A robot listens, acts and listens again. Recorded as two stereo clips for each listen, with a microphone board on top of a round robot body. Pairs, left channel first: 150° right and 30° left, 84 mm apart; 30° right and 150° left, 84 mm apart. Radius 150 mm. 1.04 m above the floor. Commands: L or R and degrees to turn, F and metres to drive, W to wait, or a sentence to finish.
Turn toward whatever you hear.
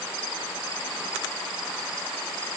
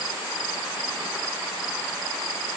W
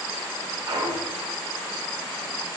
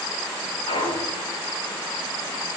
R15
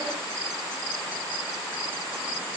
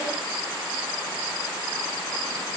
Facing where the clunk came from. I can't hear it now.